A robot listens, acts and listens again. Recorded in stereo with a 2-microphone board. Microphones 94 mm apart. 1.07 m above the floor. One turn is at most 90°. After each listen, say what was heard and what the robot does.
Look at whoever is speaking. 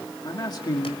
The man speaking: about 45° left or 135° left. Turn 45° left.
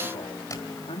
So it is at 85° left. Turn 85° left.
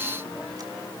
Keep listening.
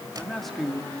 Found it: a man speaking, straight ahead.